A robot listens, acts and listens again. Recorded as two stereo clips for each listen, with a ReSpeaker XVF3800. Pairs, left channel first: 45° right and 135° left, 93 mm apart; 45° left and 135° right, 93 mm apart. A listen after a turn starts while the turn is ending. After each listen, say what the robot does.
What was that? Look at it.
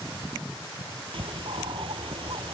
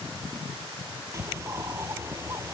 Turn 165° left.
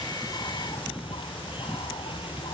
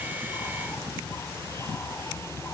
Turn 20° right.
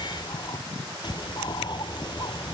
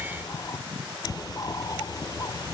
Facing the bird.